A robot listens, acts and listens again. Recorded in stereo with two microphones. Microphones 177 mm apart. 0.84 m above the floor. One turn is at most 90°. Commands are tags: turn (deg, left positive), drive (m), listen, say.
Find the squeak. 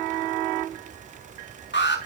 <listen/>
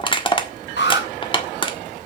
<listen/>
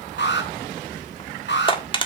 <say>I can't make out a squeak to turn to.</say>